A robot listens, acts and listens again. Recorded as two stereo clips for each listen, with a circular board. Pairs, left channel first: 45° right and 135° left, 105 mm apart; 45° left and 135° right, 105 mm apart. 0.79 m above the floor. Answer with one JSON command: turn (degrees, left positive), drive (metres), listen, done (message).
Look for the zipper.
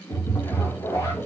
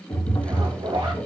{"turn": -95}
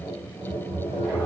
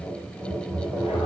{"listen": true}
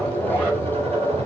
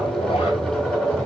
{"listen": true}
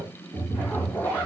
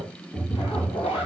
{"turn": 30}
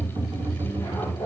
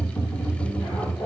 {"listen": true}
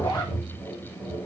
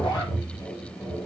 {"done": "Facing the zipper, 1 to 2 m away."}